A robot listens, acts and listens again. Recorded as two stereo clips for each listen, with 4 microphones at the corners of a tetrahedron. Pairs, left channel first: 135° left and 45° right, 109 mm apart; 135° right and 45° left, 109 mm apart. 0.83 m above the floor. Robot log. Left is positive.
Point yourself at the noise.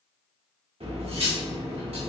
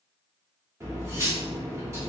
note: The cutlery clinking: 20° right.
cmd yaw -20
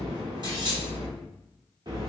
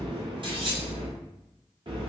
end: Facing the cutlery clinking.